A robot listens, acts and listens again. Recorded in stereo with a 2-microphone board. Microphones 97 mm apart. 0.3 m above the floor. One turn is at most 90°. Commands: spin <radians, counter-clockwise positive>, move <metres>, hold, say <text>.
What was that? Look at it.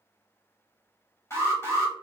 spin 0.44
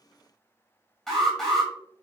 say Facing the alarm.